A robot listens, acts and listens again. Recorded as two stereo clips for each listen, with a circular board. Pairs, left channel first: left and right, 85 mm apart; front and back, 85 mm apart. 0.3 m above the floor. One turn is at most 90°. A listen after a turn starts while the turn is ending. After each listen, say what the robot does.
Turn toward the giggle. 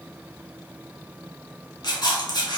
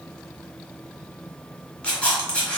Keep listening.
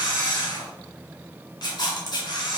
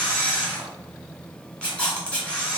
Keep listening.
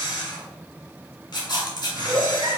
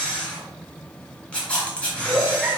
Turn 90° right.
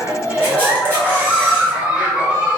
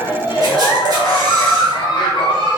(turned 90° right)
Turn 15° right.
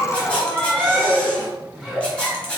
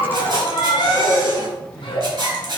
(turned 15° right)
Facing the giggle, 1 to 2 m away.